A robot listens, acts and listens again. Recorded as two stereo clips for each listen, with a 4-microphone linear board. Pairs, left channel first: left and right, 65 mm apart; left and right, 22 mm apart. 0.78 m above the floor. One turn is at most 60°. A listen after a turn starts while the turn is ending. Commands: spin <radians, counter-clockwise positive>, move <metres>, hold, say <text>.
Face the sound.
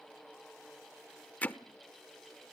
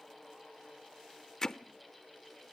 spin 0.44
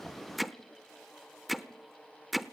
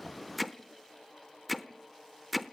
say Found it: hammering, straight ahead, under 1 m away.